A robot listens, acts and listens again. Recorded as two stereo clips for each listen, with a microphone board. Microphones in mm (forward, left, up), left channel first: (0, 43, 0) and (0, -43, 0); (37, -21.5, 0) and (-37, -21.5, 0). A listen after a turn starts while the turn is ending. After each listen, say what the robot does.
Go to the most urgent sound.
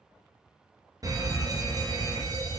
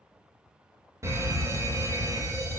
Turn 135° right.
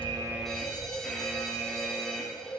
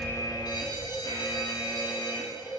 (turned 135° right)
Turn 10° left.
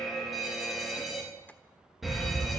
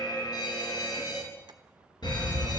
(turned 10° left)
Drive 1.0 m forward.
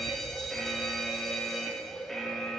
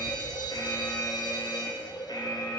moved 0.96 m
Drive 1.0 m forward.
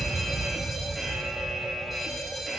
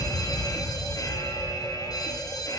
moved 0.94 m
Drive 1.0 m forward.
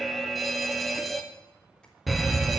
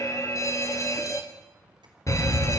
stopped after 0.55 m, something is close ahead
I am next to the fire alarm.